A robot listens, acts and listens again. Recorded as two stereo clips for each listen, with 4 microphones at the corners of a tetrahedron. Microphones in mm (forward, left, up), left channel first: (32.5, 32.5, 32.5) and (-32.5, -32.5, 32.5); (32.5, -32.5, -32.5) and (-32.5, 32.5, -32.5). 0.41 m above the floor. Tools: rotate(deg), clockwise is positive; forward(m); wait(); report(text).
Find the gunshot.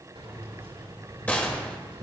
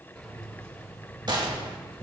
rotate(-115)
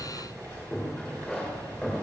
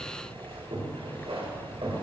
report("Facing where the gunshot came from. I can't hear it now.")